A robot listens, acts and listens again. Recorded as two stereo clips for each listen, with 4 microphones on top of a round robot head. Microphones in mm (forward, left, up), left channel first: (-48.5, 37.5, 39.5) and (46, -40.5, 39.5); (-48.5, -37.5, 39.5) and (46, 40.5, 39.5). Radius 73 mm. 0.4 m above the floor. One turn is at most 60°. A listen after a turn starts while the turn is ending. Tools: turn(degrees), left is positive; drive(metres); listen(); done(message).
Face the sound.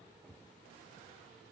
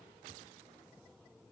listen()
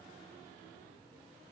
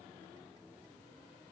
listen()
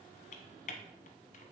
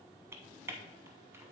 turn(degrees=60)
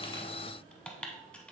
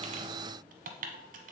turn(degrees=60)
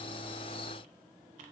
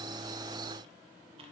listen()
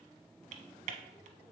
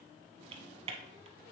done("Facing the typing on a keyboard.")